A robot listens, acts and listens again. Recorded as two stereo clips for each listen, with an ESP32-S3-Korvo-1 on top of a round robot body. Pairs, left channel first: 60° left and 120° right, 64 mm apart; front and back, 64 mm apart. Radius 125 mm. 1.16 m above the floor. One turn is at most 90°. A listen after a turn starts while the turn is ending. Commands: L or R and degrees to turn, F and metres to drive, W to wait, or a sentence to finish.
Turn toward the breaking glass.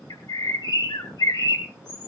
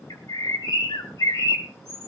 W
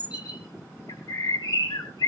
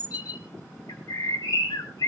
W
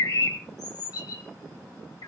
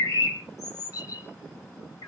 I can't make out breaking glass, only a bird.